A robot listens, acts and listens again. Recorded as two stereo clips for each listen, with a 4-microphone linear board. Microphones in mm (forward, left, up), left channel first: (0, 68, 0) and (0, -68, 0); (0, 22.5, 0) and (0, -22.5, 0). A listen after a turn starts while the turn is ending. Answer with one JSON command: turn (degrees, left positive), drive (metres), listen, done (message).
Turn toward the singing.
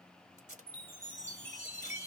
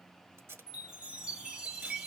{"listen": true}
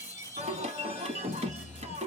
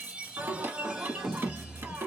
{"turn": -55}
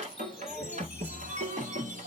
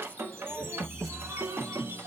{"turn": -65}
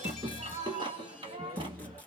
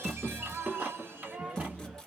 {"turn": -40}
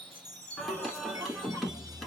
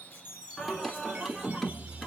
{"done": "Found it: singing, straight ahead, 1 to 2 m away."}